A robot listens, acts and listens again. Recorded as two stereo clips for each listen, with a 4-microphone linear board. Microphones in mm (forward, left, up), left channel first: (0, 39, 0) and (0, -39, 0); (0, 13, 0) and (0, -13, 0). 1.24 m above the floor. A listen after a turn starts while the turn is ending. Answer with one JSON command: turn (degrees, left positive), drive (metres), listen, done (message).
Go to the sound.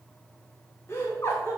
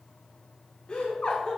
{"turn": 35}
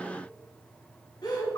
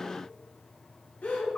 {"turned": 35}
{"turn": 110}
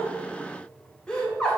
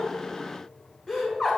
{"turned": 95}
{"turn": 15}
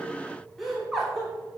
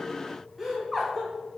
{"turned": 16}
{"drive": 1.0}
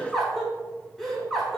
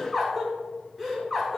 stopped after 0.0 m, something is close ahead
{"done": "Blocked. The laughter is further on, straight ahead."}